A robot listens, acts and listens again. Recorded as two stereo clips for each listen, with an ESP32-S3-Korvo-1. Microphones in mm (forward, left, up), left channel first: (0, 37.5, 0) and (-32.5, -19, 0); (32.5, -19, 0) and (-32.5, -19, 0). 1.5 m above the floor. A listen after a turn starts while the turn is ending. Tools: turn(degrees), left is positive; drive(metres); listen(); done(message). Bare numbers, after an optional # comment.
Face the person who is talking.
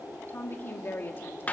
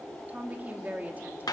# The woman speaking: 115° left.
turn(115)
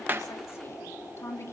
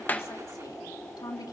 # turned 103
# The woman speaking is now 10° left.
turn(10)
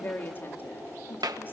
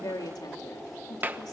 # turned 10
done("Found it: a woman speaking, straight ahead.")